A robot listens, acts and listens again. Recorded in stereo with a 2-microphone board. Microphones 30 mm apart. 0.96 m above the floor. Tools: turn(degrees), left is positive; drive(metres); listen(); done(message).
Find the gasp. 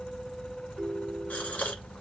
turn(degrees=70)
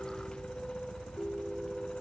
listen()
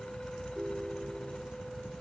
done("I heard a gasp, but can't make it out now. It was about straight ahead or 40° left.")